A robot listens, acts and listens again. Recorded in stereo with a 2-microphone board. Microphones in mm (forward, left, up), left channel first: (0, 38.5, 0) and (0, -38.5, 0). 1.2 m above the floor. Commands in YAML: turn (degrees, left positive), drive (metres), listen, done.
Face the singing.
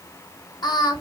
turn: 70
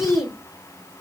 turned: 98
done: "Facing the singing, 2 to 4 m away."